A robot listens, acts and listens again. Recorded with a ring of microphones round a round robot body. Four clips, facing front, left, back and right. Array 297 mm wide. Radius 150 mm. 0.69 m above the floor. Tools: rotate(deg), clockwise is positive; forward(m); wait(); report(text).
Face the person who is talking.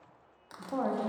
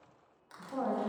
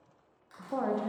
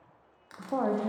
rotate(105)
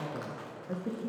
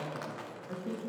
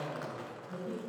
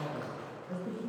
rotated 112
report("Found it: a woman speaking, straight ahead, under 1 m away.")